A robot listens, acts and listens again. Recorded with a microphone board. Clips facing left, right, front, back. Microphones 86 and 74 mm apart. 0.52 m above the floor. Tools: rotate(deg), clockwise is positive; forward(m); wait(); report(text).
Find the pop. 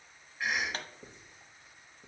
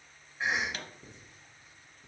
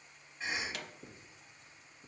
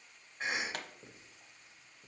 rotate(-140)
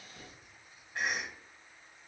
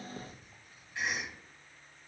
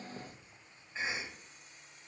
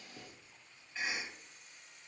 report("I heard a pop from this way, but can't make it out now.")